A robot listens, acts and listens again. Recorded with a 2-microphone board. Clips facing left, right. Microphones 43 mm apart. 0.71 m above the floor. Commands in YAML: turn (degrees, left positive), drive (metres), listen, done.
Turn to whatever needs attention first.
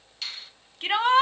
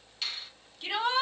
turn: 45
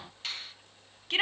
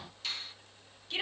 turn: 80
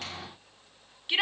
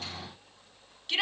turn: 25
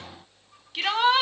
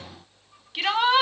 done: "Found it: a shout, straight ahead, under 1 m away."